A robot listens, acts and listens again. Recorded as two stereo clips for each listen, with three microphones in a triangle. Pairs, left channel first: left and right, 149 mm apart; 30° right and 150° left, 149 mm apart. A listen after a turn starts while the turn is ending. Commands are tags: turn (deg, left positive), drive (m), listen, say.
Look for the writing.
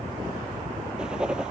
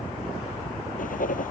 <say>Found it: writing, straight ahead.</say>